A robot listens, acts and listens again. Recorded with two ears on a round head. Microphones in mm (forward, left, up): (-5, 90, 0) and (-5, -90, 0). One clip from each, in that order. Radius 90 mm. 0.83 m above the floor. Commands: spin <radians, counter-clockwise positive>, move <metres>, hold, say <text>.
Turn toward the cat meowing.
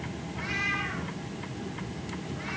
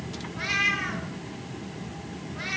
spin -1.57
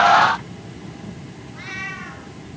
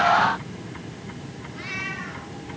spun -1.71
spin 0.35
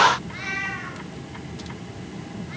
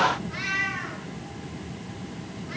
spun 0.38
say Facing the cat meowing, over 4 m away.